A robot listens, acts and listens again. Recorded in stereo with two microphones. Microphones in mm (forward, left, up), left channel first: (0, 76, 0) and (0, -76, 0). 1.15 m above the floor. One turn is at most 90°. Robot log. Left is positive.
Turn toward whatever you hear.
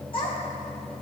note: The child speaking: about 35° left or 145° left.
cmd yaw +35
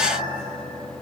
cmd idle
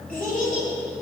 note: So it is at 105° left.
cmd yaw +90
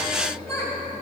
note: The child speaking is now 15° left.
cmd yaw +15
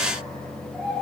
end: Facing the child speaking, over 4 m away.